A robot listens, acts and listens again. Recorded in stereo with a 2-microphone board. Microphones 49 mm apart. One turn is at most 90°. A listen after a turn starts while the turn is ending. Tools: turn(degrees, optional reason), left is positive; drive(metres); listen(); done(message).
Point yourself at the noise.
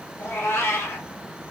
turn(degrees=90)
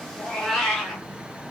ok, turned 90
turn(degrees=10, reason="So it is at 10° left.")
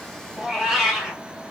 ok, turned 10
done("Facing the cat meowing, 2 to 4 m away.")